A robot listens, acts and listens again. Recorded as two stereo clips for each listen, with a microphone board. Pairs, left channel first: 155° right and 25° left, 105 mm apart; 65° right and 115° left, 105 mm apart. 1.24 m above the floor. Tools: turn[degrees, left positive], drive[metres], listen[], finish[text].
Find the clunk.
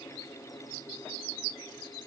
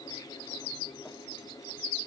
Action: listen[]
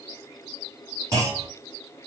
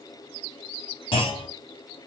Thought: The clunk: 35° right.
Action: turn[-35]
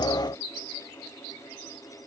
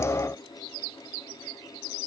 Action: finish[I heard a clunk from this way, but can't make it out now.]